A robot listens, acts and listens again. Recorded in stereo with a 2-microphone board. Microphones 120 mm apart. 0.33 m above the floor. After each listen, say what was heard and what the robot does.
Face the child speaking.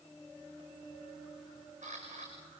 Keep listening.
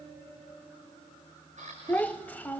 Turn 30° left.
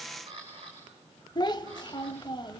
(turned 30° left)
So it is at 135° left. Turn 135° left.
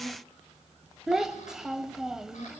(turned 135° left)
Found it: a child speaking, straight ahead.